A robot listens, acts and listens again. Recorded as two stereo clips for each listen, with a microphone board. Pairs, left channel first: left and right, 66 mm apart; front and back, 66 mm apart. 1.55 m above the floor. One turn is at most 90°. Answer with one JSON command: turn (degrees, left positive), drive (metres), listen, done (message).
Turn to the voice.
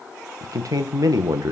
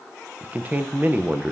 {"turn": -90}
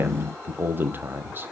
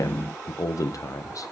{"turn": -35}
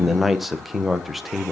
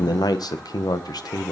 {"done": "Facing the man speaking."}